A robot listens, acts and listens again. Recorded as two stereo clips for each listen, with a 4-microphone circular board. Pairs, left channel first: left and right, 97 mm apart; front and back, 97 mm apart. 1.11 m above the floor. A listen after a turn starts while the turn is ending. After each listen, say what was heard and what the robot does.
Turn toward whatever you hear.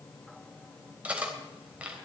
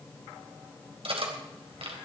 The cutlery clinking: 165° right. Turn 165° right.
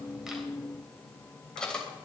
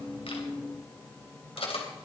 The cutlery clinking is now 10° left. Turn 10° left.
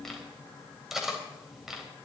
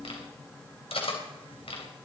Found it: cutlery clinking, straight ahead.